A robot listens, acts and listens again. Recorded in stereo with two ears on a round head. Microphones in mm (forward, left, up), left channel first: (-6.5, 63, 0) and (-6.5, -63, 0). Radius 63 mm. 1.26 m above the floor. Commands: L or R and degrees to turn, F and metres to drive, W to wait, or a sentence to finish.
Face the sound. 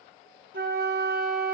R70
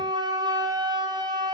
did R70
R30
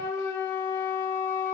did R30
L15
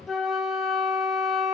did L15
Facing the flute.